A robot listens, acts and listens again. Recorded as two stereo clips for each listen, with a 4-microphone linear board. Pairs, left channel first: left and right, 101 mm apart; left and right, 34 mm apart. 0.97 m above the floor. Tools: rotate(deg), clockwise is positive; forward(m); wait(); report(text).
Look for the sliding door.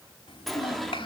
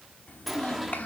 rotate(-30)
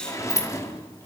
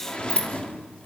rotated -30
rotate(-150)
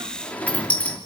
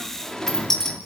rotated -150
rotate(-15)
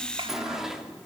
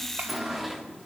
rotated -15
report("Facing the sliding door, 2 to 4 m away.")